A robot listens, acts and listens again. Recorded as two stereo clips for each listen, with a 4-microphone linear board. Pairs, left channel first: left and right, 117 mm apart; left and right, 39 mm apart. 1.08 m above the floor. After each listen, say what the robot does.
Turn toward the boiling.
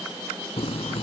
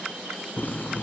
Turn 55° left.
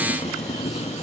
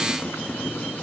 Turn 70° left.
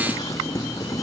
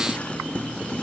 Turn 30° left.
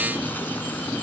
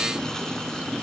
Turn 15° left.
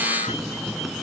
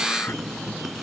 Found it: boiling, straight ahead.